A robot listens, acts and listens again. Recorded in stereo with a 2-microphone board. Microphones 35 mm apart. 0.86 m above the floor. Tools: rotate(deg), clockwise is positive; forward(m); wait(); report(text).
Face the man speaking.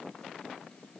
wait()
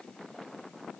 wait()
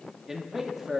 rotate(30)
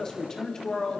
rotate(-20)
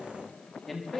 report("Found it: a man speaking, straight ahead.")